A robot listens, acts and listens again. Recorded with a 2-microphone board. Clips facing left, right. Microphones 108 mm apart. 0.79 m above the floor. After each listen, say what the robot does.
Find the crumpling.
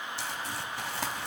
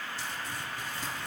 Turn 90° left.
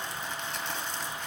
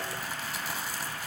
Facing the crumpling, 1 to 2 m away.